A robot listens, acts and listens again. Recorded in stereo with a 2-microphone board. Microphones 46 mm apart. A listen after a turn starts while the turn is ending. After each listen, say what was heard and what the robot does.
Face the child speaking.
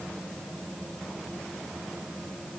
Keep listening.
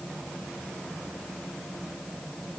Keep listening.
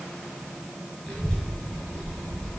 Turn 30° left.
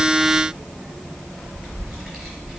So it is at 25° right. Turn 25° right.
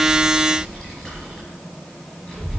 Found it: a child speaking, straight ahead.